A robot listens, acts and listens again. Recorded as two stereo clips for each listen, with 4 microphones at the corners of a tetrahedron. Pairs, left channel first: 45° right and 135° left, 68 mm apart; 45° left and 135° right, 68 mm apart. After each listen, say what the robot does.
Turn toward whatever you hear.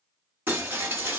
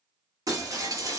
Turn 160° right.
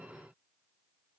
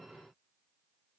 Facing where the breaking glass came from. I can't hear it now.